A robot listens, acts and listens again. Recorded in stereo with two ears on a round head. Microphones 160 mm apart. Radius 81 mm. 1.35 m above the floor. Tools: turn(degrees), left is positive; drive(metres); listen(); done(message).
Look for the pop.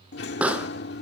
turn(degrees=-30)
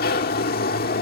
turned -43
listen()
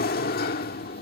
done("I heard a pop, but can't make it out now. It was about 35° left or 130° right.")